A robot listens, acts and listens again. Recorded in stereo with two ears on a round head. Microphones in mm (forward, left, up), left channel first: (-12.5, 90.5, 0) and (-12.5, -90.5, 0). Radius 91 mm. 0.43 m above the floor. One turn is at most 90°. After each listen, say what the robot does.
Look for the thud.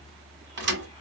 Turn 60° right.
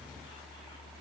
Keep listening.
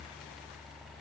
I heard a thud, but can't make it out now. It was about straight ahead or 60° right.